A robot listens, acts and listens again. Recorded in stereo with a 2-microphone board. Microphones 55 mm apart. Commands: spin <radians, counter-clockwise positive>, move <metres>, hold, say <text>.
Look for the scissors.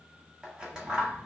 spin -0.26
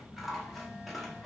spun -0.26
say Found it: scissors, straight ahead, 1 to 2 m away.